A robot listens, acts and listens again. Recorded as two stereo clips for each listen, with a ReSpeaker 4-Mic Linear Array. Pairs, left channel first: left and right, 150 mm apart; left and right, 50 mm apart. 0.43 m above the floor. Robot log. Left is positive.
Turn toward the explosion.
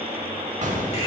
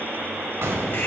note: The explosion: about 55° right or 125° right.
cmd yaw -55
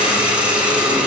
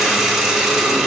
cmd idle
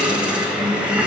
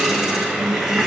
end: I heard an explosion, but can't make it out now. It was about straight ahead or 70° right.